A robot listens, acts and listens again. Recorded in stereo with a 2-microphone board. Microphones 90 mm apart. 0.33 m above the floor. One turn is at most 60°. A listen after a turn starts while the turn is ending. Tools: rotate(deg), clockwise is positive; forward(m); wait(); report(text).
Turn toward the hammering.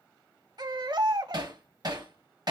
rotate(50)
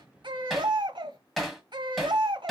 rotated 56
report("Facing the hammering.")